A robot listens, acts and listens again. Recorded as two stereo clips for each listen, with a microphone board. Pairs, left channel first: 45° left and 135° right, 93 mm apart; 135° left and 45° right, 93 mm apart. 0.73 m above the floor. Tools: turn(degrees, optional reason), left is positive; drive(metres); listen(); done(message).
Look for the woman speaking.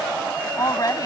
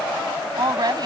done("Facing the woman speaking.")